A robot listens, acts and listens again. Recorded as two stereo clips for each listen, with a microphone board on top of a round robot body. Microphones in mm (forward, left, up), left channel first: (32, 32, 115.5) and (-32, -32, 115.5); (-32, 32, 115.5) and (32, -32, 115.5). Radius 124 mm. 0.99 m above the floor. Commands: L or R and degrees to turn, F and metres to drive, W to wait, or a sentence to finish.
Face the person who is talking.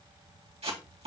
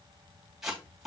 W
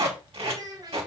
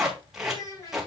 L180
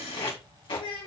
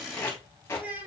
L25
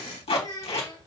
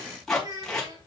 Facing the child speaking, over 4 m away.